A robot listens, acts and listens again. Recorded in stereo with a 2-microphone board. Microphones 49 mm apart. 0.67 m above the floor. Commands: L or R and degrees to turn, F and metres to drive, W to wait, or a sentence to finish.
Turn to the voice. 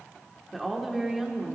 R30
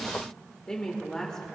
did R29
L15
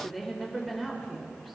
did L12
Facing the woman speaking.